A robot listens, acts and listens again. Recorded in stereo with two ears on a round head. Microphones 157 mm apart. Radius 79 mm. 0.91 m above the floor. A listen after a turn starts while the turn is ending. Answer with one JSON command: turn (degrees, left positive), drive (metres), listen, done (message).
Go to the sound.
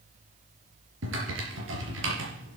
{"turn": -90}
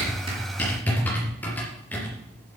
{"turn": 10}
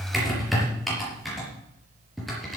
{"drive": 1.0}
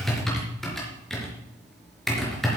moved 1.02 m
{"drive": 1.0}
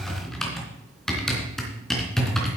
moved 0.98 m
{"drive": 1.0}
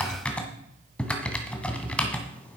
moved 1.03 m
{"turn": 10}
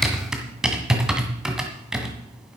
{"drive": 1.0}
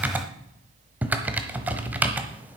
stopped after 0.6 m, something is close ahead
{"turn": -10}
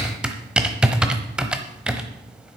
{"done": "Arrived at the typing on a keyboard, straight ahead."}